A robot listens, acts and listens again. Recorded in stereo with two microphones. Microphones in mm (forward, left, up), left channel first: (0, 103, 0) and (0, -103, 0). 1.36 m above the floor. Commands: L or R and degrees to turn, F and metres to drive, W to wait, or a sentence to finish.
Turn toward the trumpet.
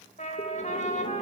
L35
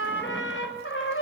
L110
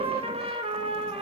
R30
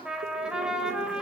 Found it: a trumpet, straight ahead.